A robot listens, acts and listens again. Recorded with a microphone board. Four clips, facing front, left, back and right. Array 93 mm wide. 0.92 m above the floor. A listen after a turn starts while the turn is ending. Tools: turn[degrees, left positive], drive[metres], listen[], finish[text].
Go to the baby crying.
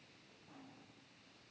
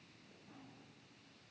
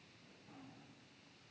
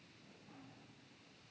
Action: listen[]
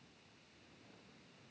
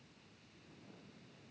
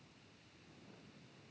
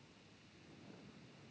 Action: listen[]
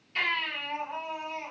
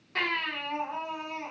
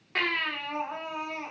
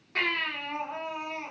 Thought: The baby crying: straight behind.
Action: turn[180]
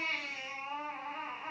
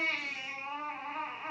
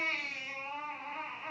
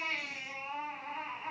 Thought: The baby crying is now 75° left.
Action: turn[75]
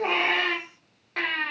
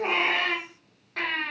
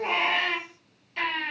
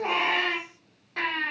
Action: drive[1.0]
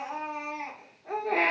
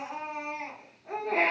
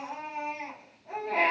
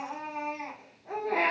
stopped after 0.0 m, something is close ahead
Action: finish[Blocked. The baby crying is further on, straight ahead.]